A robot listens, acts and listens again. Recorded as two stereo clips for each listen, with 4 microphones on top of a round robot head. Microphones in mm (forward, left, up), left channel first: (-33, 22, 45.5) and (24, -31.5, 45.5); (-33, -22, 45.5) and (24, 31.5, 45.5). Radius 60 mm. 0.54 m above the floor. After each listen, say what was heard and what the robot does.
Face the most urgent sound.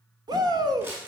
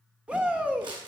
The shout: 30° right. Turn 30° right.
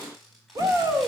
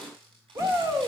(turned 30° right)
Facing the shout, 2 to 4 m away.